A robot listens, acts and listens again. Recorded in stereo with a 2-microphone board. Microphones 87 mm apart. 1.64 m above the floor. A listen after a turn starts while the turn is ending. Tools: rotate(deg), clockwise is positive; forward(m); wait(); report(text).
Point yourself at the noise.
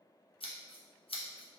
rotate(-90)
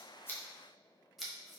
report("Facing the scissors, under 1 m away.")